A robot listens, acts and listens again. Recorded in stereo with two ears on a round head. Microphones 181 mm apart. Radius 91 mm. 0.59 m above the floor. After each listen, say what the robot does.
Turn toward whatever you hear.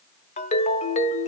Turn 35° left.
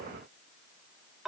Facing the ringtone, 1 to 2 m away.